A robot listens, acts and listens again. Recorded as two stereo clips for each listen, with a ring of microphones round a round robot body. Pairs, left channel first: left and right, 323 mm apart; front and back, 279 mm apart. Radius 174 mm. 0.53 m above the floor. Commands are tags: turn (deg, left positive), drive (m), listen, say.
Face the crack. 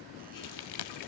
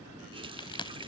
<turn deg="75"/>
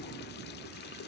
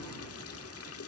<say>I heard a crack from this way, but can't make it out now.</say>